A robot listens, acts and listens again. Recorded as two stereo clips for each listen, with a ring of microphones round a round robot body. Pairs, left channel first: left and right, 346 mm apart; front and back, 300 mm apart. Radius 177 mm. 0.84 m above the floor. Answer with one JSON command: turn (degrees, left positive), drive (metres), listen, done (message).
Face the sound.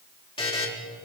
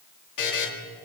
{"turn": 15}
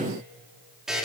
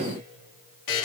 {"done": "Facing the buzzer, 2 to 4 m away."}